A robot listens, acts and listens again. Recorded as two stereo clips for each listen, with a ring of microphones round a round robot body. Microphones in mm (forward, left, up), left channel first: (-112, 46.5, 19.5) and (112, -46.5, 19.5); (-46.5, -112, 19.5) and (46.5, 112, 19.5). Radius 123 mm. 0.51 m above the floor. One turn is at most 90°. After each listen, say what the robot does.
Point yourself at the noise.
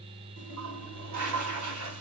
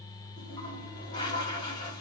Turn 40° right.
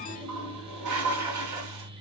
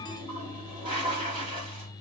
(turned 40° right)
Facing the toilet flushing, 2 to 4 m away.